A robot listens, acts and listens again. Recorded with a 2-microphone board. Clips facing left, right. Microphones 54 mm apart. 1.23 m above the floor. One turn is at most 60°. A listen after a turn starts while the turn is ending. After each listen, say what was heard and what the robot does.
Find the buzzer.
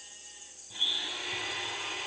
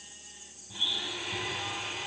Keep listening.
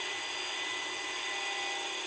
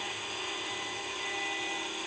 Keep listening.
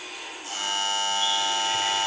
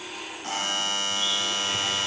The buzzer: about 45° right or 135° right. Turn 45° right.
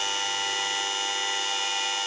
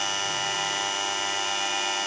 So it is at 80° right. Turn 60° right.
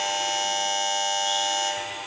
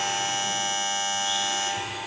The buzzer is now 45° right. Turn 45° right.
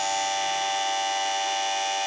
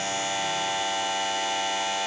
Facing the buzzer, 1 to 2 m away.